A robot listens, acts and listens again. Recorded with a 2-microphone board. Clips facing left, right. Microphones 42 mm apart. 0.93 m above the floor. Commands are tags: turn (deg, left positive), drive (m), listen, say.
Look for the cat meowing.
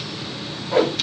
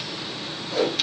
<listen/>
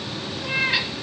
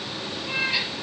<turn deg="70"/>
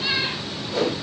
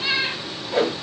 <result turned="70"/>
<say>Found it: a cat meowing, straight ahead.</say>